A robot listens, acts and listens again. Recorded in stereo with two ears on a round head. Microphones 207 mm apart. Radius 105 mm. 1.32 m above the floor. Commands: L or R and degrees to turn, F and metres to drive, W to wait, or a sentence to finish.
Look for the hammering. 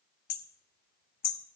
L40
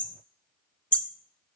Found it: hammering, straight ahead, 1 to 2 m away.